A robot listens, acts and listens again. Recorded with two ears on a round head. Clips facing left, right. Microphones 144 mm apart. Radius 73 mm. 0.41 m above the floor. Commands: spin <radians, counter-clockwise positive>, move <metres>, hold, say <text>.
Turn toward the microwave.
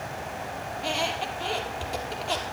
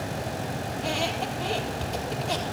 hold
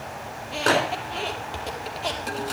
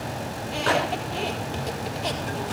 spin 0.79
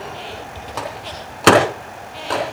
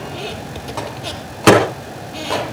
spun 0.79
say Facing the microwave.